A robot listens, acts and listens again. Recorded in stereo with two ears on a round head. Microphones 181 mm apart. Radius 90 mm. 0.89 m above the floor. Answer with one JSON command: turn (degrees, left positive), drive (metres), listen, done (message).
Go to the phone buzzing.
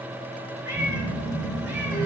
{"turn": -65}
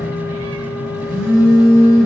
{"drive": 1.0}
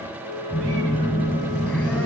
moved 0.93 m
{"turn": 10}
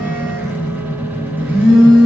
{"drive": 1.0}
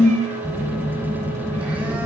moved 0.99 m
{"turn": -10}
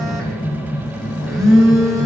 {"drive": 1.0}
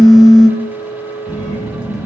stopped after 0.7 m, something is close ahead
{"done": "I am next to the phone buzzing."}